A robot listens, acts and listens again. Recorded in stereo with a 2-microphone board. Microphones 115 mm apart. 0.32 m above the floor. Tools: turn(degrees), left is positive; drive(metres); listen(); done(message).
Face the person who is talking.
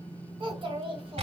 turn(degrees=-55)
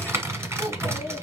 turn(degrees=-50)
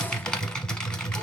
listen()
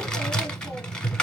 listen()
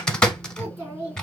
turn(degrees=-20)
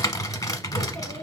listen()
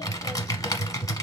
listen()
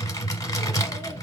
done("I heard a child speaking from this way, but can't make it out now.")